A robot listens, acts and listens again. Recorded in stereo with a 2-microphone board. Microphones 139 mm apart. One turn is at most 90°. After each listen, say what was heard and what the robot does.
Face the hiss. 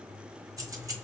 Keep listening.
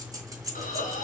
The hiss: about 75° left or 105° left. Turn 75° left.
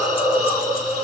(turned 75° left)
So it is at 30° left. Turn 30° left.
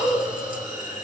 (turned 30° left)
The hiss is now 10° right. Turn 10° right.
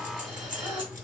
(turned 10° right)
Facing the hiss, 1 to 2 m away.